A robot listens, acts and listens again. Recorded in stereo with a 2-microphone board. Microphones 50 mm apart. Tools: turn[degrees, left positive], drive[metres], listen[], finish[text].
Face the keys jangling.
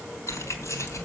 Action: turn[90]
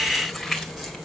Action: finish[Found it: keys jangling, straight ahead.]